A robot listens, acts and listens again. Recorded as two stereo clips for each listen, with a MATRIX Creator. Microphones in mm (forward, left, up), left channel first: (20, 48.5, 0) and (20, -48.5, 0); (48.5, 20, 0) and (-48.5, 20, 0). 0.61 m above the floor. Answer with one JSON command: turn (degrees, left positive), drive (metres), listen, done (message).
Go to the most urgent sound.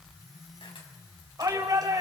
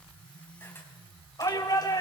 {"turn": -45}
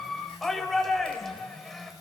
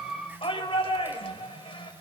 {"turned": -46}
{"drive": 1.0}
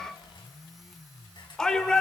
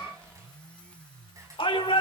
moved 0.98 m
{"turn": 10}
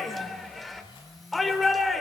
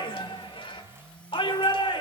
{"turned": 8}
{"drive": 1.0}
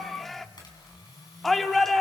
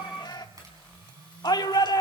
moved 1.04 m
{"drive": 1.0}
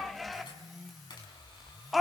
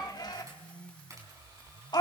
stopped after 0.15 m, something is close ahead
{"done": "Arrived at the shout, straight ahead."}